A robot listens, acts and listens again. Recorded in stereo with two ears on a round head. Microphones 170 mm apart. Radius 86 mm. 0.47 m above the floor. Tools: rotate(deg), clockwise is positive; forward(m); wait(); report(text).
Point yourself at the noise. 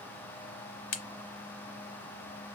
rotate(-90)
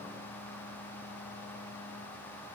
report("I heard a crack from this way, but can't make it out now.")